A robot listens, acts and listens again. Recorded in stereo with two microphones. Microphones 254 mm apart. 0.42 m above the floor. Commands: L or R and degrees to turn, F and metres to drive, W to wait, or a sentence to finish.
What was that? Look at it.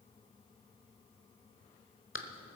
L55
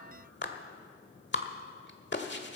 L55
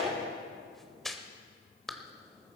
Facing the clap, 1 to 2 m away.